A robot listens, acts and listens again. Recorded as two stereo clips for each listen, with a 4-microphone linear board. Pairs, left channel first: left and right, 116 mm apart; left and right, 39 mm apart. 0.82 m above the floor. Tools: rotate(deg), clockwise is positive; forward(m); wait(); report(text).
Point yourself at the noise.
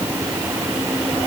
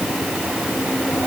wait()
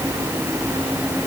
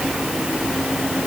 wait()
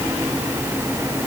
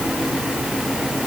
report("I can't make out anything to turn to.")